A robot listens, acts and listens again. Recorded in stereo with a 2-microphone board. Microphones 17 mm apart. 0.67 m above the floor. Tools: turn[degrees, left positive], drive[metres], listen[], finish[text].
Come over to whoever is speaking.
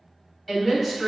Action: turn[-30]
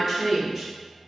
Thought: So it is at 135° right.
Action: turn[-135]
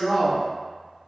Action: drive[1.0]
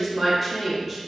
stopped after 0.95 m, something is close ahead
Thought: The woman speaking is now 10° left.
Action: turn[10]
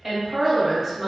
Action: finish[Arrived at the woman speaking, straight ahead.]